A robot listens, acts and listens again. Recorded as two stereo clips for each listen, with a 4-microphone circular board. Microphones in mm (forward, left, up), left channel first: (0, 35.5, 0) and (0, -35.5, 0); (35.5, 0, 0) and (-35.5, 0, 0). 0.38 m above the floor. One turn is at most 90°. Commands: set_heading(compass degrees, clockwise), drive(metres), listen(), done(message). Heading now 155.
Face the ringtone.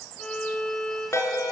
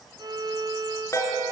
set_heading(110)
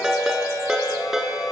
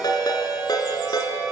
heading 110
done("Facing the ringtone.")